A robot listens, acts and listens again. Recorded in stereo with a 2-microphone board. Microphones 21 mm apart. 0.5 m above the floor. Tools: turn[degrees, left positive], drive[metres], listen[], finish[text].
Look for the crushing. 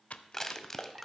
Thought: The crushing: about 20° left or 160° left.
Action: turn[20]
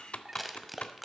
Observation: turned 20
Action: finish[Found it: crushing, straight ahead, under 1 m away.]